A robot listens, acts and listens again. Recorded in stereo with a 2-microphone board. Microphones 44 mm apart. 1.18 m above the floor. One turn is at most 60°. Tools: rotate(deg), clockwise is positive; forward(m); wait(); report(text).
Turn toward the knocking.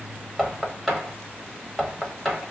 rotate(-30)
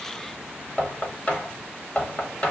rotate(-60)
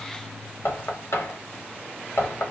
rotate(-60)
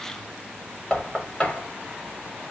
rotate(-25)
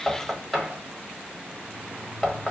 report("Found it: knocking, straight ahead, 1 to 2 m away.")